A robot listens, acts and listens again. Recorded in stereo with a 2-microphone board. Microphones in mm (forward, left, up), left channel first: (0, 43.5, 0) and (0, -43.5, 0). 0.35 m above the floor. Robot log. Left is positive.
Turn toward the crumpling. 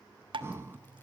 cmd idle
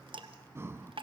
cmd idle
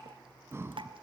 end: I can't make out crumpling, only dripping and breathing.